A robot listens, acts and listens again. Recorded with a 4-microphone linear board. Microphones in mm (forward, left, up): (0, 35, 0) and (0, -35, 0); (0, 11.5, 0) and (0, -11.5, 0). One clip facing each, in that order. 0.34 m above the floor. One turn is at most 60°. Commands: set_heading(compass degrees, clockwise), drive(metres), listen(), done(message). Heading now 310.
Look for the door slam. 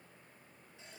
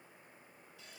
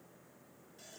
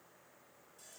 listen()
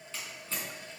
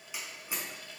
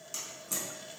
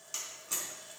set_heading(340)
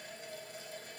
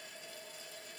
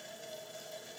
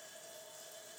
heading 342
listen()
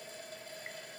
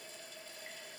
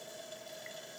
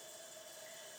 done("I heard a door slam, but can't make it out now. It was about 20° left or 135° right.")